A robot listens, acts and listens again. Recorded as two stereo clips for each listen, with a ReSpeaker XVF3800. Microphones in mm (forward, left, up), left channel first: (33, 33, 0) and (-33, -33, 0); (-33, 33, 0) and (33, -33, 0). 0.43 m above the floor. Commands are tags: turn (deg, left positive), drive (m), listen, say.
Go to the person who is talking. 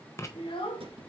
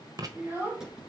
<turn deg="25"/>
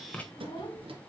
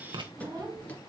<drive m="1.0"/>
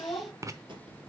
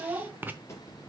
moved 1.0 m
<drive m="1.0"/>
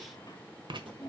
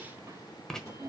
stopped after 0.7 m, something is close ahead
<say>I am next to the child speaking.</say>